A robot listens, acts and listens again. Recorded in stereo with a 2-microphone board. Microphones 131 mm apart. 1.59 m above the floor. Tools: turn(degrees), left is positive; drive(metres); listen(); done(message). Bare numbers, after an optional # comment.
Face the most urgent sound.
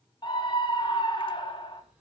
# The scream: about 40° left or 140° left.
turn(40)
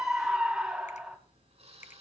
done("Found it: a scream, straight ahead, 2 to 4 m away.")